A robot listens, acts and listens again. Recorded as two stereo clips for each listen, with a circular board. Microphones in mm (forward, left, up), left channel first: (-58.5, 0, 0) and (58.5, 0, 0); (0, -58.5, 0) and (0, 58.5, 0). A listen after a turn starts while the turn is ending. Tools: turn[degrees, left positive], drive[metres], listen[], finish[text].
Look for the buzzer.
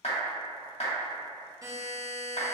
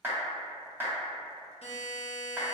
Thought: The buzzer: 65° right.
Action: turn[-65]
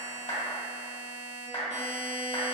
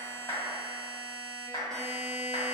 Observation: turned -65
Action: finish[Facing the buzzer, under 1 m away.]